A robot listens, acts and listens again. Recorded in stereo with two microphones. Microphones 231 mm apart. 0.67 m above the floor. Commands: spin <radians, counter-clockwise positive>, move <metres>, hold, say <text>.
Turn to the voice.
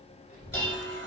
spin 0.61
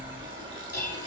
say Facing the child speaking, 2 to 4 m away.